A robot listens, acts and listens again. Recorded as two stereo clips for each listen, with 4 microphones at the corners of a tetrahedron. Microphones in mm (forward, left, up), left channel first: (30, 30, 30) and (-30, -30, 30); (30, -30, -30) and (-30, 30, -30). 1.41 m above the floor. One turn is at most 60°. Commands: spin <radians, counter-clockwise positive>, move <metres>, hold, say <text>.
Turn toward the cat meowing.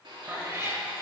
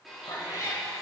spin -1.05
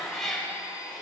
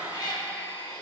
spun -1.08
spin -0.70
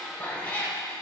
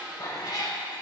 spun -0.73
spin -0.35
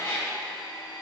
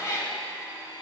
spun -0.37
spin -0.17
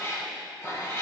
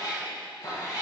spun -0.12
spin -0.17
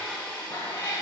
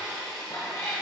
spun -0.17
say Facing the cat meowing, 2 to 4 m away.